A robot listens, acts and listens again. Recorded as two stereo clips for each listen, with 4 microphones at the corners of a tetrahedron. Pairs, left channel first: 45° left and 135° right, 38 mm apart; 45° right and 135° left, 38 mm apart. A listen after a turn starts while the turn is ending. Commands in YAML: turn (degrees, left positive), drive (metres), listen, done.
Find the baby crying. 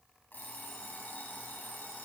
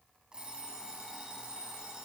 listen: true
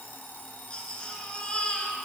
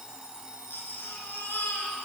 turn: -20
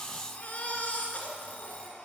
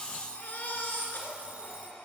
done: "Found it: a baby crying, straight ahead, 2 to 4 m away."